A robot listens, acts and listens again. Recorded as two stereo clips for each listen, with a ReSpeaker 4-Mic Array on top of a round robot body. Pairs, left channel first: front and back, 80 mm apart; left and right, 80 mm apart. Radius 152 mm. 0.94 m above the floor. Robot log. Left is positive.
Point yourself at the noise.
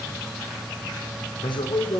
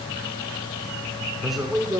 end: Facing the man speaking.